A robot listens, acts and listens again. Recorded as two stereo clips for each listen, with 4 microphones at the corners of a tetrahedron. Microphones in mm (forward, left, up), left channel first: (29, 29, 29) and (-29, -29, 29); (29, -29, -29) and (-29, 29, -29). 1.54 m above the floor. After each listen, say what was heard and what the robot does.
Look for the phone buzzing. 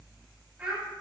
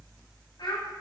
Keep listening.
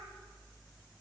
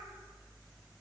Keep listening.
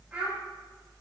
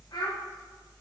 I can't make out a phone buzzing, only a child speaking.